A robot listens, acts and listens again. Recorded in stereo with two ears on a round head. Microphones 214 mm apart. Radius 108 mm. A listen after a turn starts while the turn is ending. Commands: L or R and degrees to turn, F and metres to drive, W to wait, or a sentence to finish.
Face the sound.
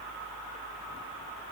W
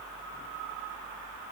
W
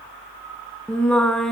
L30
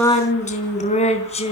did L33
L150
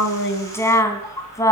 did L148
L15
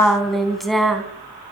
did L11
Found it: singing, straight ahead, 2 to 4 m away.